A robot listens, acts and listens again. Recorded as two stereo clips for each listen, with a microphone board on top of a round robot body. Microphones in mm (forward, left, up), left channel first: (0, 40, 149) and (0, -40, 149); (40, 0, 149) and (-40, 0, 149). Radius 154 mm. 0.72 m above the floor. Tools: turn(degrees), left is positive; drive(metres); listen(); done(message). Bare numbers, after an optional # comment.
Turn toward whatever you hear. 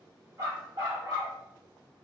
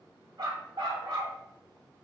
# The dog barking: 135° right.
turn(-135)
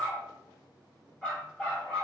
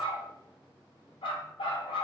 # The dog barking is now 10° left.
turn(10)
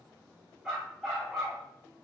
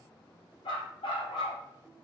done("Facing the dog barking, 2 to 4 m away.")